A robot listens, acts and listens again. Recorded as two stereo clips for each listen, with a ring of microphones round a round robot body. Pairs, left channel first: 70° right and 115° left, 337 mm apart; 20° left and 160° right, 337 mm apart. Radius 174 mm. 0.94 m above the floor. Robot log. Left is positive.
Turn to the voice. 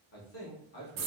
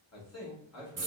note: The man speaking: 10° right.
cmd yaw -10
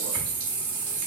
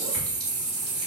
cmd idle
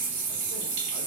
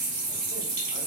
cmd idle
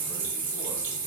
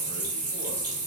end: I heard a man speaking from this way, but can't make it out now.